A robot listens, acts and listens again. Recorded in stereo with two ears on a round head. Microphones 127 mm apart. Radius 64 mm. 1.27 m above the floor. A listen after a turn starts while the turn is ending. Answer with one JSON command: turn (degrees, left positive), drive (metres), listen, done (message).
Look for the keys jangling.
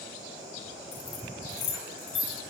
{"turn": 45}
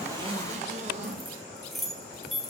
{"done": "Facing the keys jangling."}